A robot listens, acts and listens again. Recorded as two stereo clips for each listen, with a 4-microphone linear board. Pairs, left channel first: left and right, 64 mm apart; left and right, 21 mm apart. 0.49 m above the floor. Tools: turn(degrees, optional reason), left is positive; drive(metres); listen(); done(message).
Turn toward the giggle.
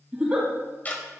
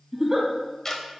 turn(degrees=-30)
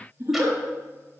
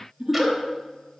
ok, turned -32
turn(degrees=-135, reason="So it is at 135° right.")
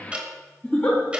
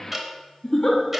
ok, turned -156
turn(degrees=20, reason="The giggle is now 20° left.")
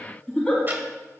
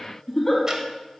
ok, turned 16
done("Found it: a giggle, straight ahead, 2 to 4 m away.")